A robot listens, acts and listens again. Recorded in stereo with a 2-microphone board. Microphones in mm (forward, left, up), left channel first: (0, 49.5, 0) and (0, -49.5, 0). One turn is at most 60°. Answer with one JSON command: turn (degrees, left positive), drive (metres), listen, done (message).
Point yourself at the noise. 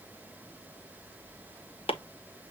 {"turn": 60}
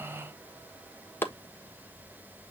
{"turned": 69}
{"turn": 20}
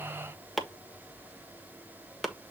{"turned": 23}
{"done": "Found it: chopping, straight ahead, 1 to 2 m away."}